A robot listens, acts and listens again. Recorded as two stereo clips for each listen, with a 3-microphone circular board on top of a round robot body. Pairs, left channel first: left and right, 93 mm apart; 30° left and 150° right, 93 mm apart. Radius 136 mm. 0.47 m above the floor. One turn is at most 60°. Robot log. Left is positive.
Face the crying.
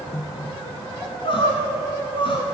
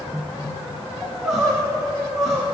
note: The crying: 125° left.
cmd yaw +60
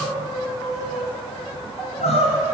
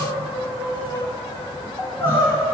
note: The crying is now 95° left.
cmd yaw +60
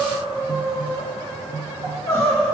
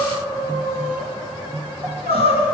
note: The crying is now 25° left.
cmd yaw +25
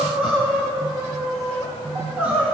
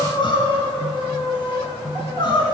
note: The crying is now 10° right.
cmd yaw -10
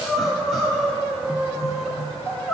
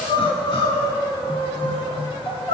end: Found it: crying, straight ahead.